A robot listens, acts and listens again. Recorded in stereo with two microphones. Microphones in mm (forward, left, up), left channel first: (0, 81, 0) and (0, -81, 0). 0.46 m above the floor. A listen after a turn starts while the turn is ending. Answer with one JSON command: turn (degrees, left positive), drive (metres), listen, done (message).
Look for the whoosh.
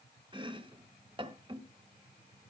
{"listen": true}
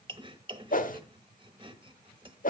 {"turn": 55}
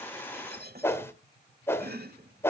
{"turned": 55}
{"turn": 15}
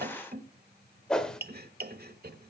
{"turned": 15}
{"done": "Facing the whoosh, 1 to 2 m away."}